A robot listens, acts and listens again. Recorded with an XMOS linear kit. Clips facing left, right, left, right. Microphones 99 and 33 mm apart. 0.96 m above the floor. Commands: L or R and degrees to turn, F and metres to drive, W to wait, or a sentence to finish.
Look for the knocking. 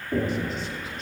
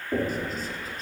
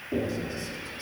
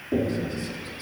R30
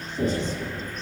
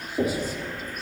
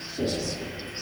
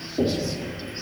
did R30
R135
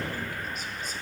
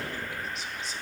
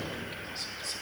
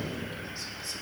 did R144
L10
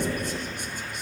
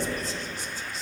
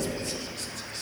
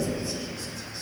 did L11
Facing the knocking.